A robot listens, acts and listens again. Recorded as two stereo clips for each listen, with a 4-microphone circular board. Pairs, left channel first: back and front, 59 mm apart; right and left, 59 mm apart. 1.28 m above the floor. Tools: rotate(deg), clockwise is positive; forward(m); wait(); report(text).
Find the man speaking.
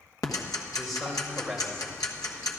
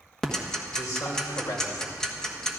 rotate(85)
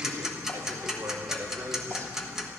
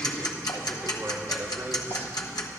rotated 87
rotate(-30)
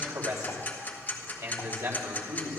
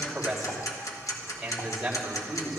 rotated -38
rotate(-10)
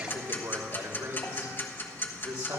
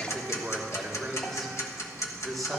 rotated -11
report("Found it: a man speaking, straight ahead.")